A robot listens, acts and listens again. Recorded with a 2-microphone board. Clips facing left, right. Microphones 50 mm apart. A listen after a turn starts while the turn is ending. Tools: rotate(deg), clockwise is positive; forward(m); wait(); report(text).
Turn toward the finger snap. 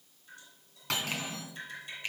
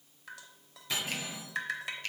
rotate(-20)
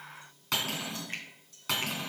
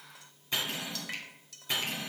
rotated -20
wait()
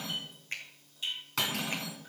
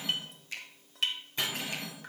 rotate(-135)
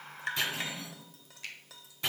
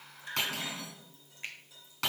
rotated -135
rotate(30)
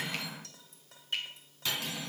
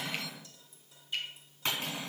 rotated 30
wait()
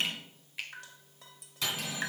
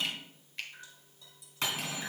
report("Found it: a finger snap, straight ahead.")